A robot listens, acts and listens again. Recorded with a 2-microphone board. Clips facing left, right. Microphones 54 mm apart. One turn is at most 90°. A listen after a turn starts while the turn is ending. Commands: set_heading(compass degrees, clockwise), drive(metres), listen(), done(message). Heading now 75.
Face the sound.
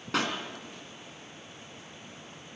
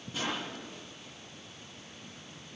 set_heading(345)
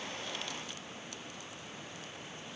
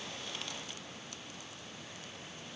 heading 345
done("Facing where the pop came from. I can't hear it now.")